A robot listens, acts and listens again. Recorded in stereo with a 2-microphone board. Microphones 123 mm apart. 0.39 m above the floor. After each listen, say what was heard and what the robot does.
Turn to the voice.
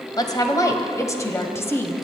The woman speaking: about 20° left or 160° left. Turn 20° left.
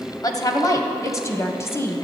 The woman speaking: about 20° left or 160° left. Turn 20° left.
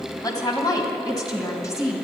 The woman speaking: about 25° left or 155° left. Turn 25° left.
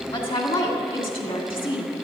So it is at 135° left. Turn 135° left.
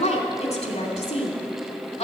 The woman speaking is now 55° left. Turn 55° left.
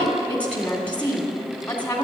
The woman speaking is now 10° left. Turn 10° left.
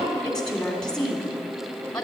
Found it: a woman speaking, straight ahead, 2 to 4 m away.